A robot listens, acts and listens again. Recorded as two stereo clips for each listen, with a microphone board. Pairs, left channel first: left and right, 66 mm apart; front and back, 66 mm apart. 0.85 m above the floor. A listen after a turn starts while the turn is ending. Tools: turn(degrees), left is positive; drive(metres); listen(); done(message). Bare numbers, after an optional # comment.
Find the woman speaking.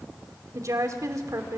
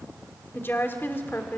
# The woman speaking: 55° right.
turn(-55)
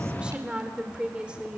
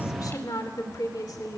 # The woman speaking is now 15° right.
turn(-15)
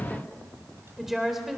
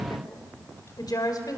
done("Found it: a woman speaking, straight ahead.")